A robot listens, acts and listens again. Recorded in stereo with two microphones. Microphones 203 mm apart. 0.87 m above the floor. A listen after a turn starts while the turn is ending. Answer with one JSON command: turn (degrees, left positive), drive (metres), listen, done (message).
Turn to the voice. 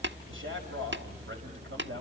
{"turn": -90}
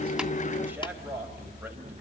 {"turn": -10}
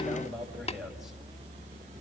{"done": "Facing the man speaking, over 4 m away."}